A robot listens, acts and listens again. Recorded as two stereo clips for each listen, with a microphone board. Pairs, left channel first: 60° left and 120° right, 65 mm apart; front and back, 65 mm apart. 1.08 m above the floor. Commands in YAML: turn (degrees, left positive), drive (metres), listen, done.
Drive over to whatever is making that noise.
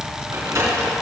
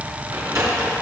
turn: -160
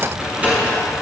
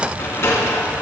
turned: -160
turn: -50
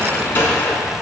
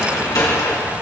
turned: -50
drive: 1.0
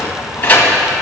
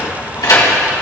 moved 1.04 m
drive: 1.0
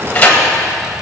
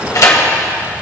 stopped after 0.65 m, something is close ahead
done: "Arrived at the sliding door, straight ahead."